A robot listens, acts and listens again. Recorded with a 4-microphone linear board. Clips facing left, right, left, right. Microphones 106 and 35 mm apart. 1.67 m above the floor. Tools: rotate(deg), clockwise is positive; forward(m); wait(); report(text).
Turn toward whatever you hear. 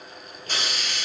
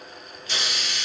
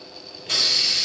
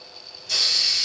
rotate(-45)
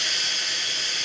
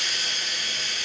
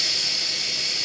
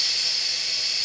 rotate(-90)
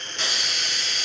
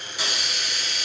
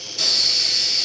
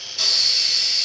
rotate(10)
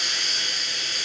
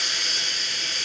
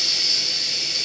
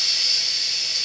report("Found it: a hiss, straight ahead.")